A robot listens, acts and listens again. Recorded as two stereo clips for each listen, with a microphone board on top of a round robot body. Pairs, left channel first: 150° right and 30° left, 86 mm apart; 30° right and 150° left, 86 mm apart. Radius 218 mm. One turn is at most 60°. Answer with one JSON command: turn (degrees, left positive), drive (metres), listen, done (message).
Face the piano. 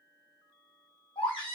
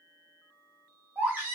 {"listen": true}
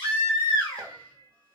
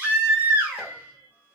{"turn": 60}
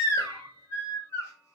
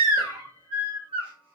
{"done": "Found it: a piano, straight ahead."}